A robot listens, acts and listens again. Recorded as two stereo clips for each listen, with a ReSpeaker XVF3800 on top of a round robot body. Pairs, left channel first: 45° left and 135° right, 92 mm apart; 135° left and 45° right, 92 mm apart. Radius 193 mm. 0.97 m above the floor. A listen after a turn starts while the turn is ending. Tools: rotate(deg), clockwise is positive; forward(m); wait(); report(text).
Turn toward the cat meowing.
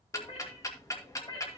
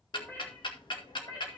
rotate(-80)
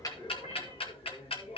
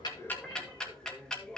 rotate(-55)
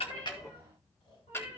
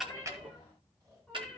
wait()
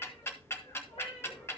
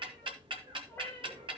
rotate(-70)
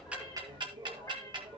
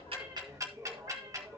rotate(10)
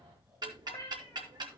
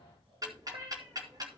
report("Found it: a cat meowing, straight ahead, 2 to 4 m away.")